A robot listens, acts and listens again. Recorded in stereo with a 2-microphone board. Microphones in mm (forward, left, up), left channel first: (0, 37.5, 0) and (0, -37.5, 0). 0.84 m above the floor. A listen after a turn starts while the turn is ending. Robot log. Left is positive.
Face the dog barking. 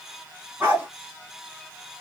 note: The dog barking: about 25° right or 155° right.
cmd yaw -25
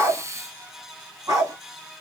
note: So it is at 130° right.
cmd yaw -130
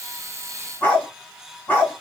note: The dog barking is now 20° left.
cmd yaw +20
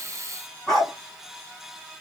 end: Facing the dog barking.